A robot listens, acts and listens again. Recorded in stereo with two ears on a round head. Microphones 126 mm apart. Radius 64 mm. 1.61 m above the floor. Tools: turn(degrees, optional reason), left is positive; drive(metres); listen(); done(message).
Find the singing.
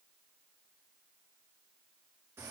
listen()
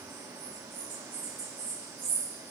listen()
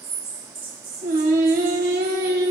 turn(degrees=-65, reason="The singing: about 65° right or 115° right.")
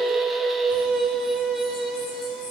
done("Facing the singing.")